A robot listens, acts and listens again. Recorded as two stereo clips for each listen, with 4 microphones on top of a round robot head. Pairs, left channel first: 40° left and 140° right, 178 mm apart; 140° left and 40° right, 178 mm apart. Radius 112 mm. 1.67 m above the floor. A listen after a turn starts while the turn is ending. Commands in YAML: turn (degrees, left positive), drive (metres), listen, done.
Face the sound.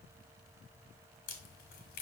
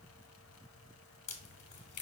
turn: 85
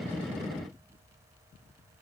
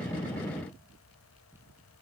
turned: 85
done: "I heard a crack from this way, but can't make it out now."